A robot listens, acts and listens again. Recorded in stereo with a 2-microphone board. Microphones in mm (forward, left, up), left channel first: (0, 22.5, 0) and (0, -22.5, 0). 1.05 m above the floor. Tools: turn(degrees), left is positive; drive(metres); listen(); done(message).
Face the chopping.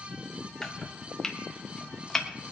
turn(degrees=30)
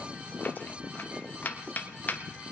turn(degrees=135)
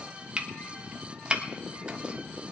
turn(degrees=-25)
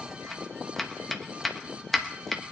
done("Found it: chopping, straight ahead.")